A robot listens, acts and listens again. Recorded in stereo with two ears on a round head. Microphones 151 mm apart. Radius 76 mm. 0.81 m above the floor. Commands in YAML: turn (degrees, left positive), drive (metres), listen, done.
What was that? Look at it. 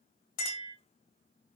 turn: 50
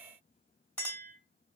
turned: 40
turn: 10
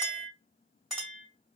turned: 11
done: "Facing the clink, 2 to 4 m away."